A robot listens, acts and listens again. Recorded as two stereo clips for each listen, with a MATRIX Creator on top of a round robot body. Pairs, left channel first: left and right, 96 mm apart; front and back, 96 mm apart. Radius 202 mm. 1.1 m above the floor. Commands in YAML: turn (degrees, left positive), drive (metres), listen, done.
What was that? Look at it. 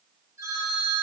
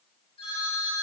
turn: -30
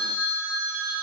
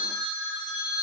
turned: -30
turn: -10
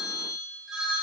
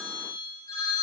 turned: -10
done: "Found it: a phone ringing, straight ahead."